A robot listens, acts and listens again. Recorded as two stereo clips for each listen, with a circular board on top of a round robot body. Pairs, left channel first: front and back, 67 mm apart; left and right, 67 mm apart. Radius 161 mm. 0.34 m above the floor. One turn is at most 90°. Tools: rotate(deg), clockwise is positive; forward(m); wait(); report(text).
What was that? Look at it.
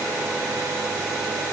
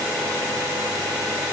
wait()
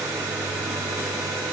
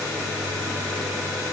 wait()
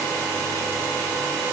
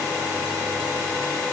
report("I can't make out anything to turn to.")